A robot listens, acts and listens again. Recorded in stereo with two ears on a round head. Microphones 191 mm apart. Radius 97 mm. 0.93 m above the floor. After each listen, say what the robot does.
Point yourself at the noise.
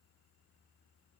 Keep listening.
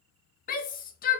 Turn 40° left.
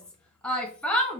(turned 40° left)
Found it: a shout, straight ahead, 1 to 2 m away.